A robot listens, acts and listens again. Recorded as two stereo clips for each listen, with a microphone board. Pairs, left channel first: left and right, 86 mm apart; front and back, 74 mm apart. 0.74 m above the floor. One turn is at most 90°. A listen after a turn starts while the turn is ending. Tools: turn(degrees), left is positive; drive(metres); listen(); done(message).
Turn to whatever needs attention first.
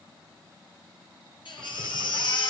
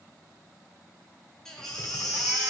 turn(degrees=80)
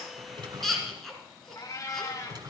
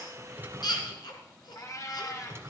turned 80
done("Facing the baby crying, 2 to 4 m away.")